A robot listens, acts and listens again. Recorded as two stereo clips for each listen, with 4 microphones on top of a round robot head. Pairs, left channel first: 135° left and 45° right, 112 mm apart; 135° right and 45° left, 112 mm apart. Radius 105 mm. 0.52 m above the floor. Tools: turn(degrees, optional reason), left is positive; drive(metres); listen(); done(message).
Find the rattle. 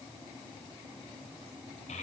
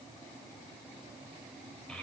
listen()
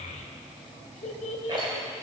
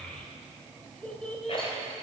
turn(degrees=-95, reason="The rattle: 95° right.")
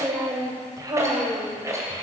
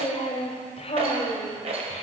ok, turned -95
turn(degrees=20, reason="The rattle is now 20° left.")
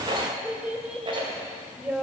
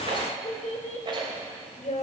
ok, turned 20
done("Facing the rattle, 2 to 4 m away.")